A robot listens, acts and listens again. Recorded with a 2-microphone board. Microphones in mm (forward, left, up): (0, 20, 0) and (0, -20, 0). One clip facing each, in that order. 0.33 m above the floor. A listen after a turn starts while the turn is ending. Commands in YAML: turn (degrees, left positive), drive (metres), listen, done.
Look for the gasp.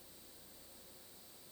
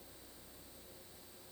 listen: true
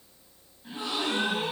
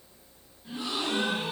turn: 25
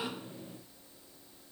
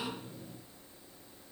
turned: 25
listen: true
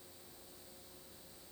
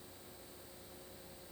done: "I heard a gasp, but can't make it out now. It was about straight ahead or 130° left."